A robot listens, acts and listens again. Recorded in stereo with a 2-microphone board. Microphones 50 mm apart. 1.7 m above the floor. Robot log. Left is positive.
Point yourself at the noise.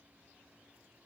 cmd idle
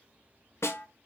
note: The snare drum: about 65° left or 115° left.
cmd yaw +65
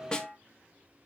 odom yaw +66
note: So it is at 20° left.
cmd yaw +20
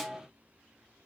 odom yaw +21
end: Facing the snare drum.